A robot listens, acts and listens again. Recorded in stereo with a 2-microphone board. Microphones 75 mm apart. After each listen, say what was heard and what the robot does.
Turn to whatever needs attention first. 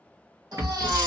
The baby crying: about 70° right or 110° right. Turn 70° right.
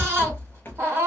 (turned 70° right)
So it is at 35° right. Turn 35° right.
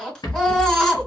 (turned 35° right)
The baby crying is now 10° left. Turn 10° left.
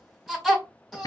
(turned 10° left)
Found it: a baby crying, straight ahead, 1 to 2 m away.